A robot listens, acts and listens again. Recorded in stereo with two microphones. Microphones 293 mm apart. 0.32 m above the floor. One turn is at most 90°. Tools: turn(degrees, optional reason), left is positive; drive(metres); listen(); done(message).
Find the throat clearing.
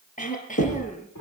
turn(degrees=25, reason="The throat clearing: about 25° left or 155° left.")
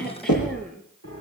listen()
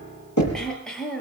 done("Facing the throat clearing.")